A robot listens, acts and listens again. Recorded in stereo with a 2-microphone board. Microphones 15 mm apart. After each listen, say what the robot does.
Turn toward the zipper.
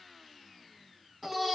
Keep listening.
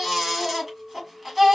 Keep listening.
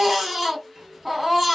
Turn 45° right.
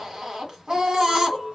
Turn 85° right.
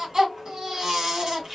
Turn 25° right.
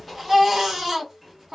Found it: a zipper, straight ahead.